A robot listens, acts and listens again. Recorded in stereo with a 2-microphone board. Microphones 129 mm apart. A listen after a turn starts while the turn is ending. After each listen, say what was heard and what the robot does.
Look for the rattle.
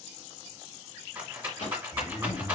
The rattle: about 15° right or 165° right. Turn 15° right.
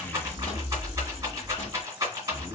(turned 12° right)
So it is at 150° right. Turn 150° right.
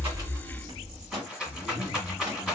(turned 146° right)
Facing the rattle.